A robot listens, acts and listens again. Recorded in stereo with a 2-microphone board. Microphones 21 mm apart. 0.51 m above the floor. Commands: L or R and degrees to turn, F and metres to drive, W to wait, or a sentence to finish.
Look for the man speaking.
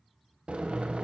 W
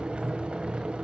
W
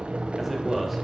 R30
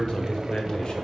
L45
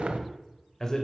L25
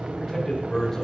L15
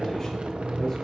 Facing the man speaking, 2 to 4 m away.